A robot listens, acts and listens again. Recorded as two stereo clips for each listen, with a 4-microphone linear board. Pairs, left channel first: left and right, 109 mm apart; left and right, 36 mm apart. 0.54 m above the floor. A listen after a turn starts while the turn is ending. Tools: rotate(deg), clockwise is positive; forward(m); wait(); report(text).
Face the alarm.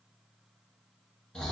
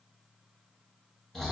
wait()
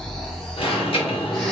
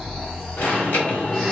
rotate(-60)
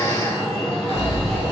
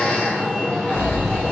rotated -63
rotate(-10)
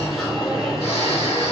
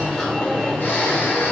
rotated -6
report("Facing the alarm, 1 to 2 m away.")